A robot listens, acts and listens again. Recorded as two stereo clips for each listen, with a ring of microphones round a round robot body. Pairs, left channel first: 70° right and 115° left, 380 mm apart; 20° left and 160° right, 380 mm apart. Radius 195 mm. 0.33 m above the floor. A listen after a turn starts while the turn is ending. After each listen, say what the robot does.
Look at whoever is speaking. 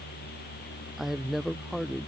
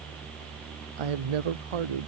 Turn 160° right.
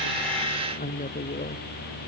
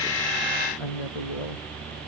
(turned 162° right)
Facing the woman speaking.